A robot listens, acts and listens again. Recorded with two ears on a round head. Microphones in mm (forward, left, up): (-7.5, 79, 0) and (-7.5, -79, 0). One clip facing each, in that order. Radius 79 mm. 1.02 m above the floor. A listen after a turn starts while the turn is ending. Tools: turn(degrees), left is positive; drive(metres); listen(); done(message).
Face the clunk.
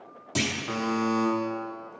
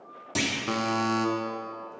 turn(degrees=30)
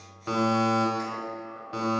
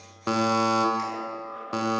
listen()
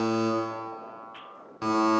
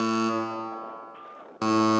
done("I heard a clunk, but can't make it out now. It was about 30° right or 150° left.")